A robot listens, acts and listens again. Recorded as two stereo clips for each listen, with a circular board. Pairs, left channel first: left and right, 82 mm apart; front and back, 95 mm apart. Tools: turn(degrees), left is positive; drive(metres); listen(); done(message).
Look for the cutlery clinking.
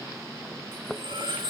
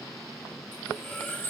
turn(degrees=-70)
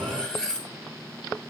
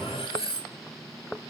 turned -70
turn(degrees=10)
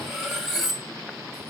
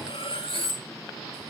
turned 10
done("Facing the cutlery clinking, 1 to 2 m away.")